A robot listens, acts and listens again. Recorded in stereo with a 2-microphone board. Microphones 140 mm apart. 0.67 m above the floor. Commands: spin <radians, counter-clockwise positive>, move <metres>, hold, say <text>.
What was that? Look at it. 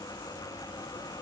hold
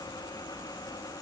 hold
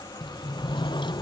spin 0.61
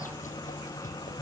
spin 2.01
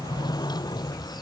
spin 0.52
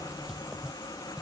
say Facing the sliding door.